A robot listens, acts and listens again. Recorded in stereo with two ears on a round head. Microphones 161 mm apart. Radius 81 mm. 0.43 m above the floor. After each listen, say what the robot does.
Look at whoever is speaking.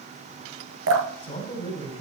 Turn 35° left.
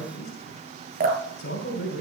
Turn 105° left.
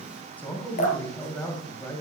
Turn 10° left.
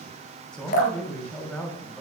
Facing the man speaking.